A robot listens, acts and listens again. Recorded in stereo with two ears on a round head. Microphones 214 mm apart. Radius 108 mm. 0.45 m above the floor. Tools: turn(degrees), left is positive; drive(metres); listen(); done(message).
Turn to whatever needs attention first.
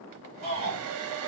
turn(degrees=-30)
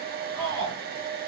turn(degrees=-120)
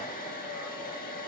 listen()
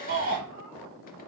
turn(degrees=-45)
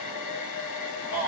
done("Found it: a shout, straight ahead.")